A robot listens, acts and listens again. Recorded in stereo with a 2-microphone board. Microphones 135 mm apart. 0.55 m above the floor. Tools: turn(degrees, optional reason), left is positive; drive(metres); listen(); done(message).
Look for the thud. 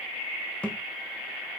turn(degrees=30)
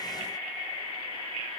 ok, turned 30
listen()
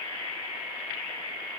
done("I heard a thud, but can't make it out now. It was about 20° right or 140° left.")